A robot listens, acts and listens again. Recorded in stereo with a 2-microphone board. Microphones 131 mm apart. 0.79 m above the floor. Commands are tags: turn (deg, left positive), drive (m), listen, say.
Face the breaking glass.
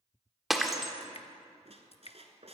<turn deg="30"/>
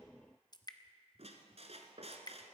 <listen/>
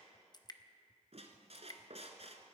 <say>I heard breaking glass, but can't make it out now. It was about 30° right or 150° left.</say>